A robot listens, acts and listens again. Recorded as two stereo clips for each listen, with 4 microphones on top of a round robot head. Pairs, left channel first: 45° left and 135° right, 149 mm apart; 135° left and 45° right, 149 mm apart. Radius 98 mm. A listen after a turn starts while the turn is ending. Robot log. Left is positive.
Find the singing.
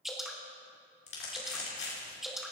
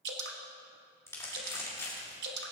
cmd idle
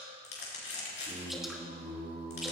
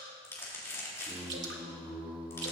note: The singing: 125° right.
cmd yaw -125
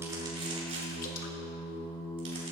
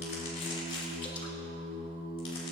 end: Facing the singing, 2 to 4 m away.